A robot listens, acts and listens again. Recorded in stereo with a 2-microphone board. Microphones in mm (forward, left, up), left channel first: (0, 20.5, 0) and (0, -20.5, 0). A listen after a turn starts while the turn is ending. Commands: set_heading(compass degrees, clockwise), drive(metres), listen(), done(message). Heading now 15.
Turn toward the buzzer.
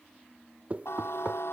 set_heading(285)
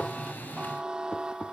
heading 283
set_heading(298)
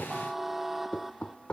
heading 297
done("Found it: a buzzer, straight ahead.")